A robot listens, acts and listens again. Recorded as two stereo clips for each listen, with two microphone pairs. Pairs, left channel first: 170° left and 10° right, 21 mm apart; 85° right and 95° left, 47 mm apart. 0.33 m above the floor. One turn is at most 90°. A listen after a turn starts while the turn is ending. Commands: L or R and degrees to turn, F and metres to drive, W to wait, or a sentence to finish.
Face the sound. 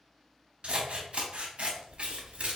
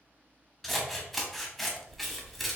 Found it: scissors, straight ahead, under 1 m away.